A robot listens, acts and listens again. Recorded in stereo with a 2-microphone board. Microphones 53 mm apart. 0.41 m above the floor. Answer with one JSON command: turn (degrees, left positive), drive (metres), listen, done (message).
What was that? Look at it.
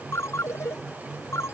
{"turn": 60}
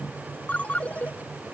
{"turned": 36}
{"turn": 30}
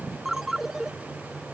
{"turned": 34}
{"done": "Found it: a ringtone, straight ahead."}